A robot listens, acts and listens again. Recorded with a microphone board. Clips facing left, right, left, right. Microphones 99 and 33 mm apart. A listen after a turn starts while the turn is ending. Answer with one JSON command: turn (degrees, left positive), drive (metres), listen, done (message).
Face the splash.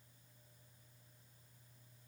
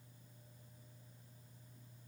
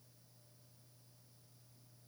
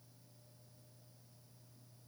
{"listen": true}
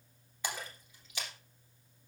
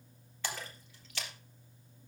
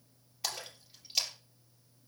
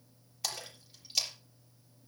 {"turn": 30}
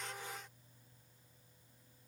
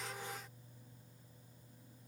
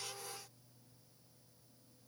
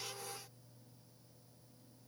{"listen": true}
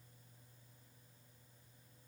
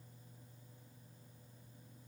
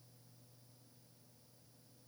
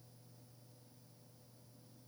{"done": "I heard a splash, but can't make it out now. It was about 15° right or 135° left."}